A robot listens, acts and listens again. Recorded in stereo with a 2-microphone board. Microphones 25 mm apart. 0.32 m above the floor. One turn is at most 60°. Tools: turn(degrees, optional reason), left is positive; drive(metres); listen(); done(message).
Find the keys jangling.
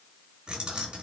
turn(degrees=-40, reason="The keys jangling: about 40° right or 140° right.")
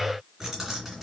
done("Found it: keys jangling, straight ahead, 2 to 4 m away.")